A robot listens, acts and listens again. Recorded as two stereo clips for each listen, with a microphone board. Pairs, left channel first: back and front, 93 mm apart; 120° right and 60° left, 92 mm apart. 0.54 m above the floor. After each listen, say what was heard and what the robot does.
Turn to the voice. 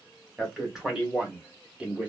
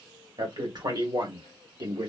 The man speaking: 70° left. Turn 70° left.
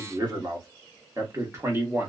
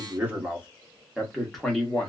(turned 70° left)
The man speaking is now 45° right. Turn 45° right.
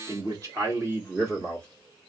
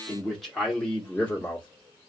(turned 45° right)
The man speaking is now 50° right. Turn 50° right.
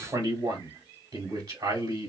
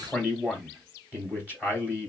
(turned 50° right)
The man speaking is now 10° right. Turn 10° right.
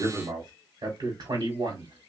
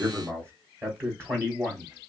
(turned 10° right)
Found it: a man speaking, straight ahead.